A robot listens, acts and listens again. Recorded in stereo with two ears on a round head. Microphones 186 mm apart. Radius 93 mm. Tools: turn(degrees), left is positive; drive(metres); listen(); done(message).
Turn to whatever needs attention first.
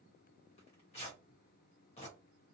listen()
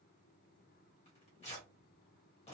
listen()
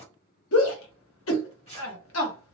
turn(degrees=65)
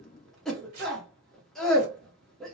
done("Facing the shout, under 1 m away.")